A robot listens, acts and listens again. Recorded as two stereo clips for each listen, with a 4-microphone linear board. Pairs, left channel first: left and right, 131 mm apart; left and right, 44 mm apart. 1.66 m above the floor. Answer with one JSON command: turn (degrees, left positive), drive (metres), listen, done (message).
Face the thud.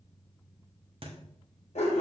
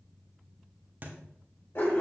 {"turn": -45}
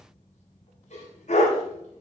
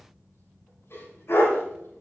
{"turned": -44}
{"listen": true}
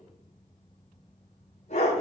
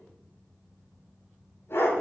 {"done": "I heard a thud, but can't make it out now. It was about straight ahead or 90° right."}